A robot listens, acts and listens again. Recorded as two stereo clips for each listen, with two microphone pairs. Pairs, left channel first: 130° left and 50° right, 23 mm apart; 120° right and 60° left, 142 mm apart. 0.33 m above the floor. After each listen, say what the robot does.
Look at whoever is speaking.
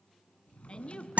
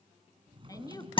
Turn 180° left.
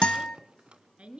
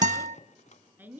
Turn 15° right.
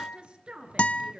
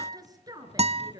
Facing the woman speaking, over 4 m away.